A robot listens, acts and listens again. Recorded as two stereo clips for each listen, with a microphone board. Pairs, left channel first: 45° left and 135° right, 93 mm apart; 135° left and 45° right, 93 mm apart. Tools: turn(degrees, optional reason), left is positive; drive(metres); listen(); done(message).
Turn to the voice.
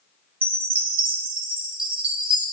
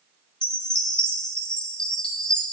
listen()
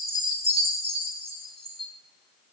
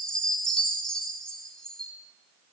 listen()
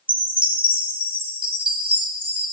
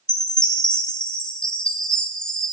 done("I can't make out anyone speaking, only a chime.")